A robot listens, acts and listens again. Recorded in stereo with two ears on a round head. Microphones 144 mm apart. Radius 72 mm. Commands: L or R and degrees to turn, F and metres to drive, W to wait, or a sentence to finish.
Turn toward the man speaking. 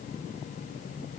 W
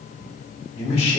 L35
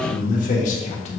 L40
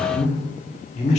L45
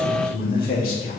L120
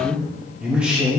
R10
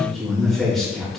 Found it: a man speaking, straight ahead.